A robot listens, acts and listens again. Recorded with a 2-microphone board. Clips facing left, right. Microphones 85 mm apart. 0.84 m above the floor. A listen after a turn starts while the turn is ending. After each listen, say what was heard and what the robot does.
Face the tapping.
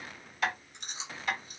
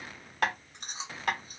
The tapping: about 60° right or 120° right. Turn 60° right.
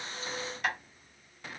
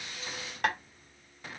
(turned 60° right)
So it is at 60° right. Turn 60° right.
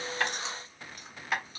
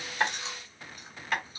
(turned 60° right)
Facing the tapping.